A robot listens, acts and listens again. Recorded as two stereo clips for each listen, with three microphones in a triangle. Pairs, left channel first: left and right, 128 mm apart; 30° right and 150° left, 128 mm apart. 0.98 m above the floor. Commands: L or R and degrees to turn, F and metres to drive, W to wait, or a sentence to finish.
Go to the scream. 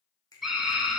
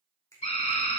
F1.0
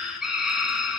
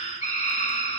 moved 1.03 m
F1.0
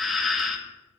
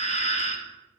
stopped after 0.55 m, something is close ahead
Arrived at the scream, straight ahead.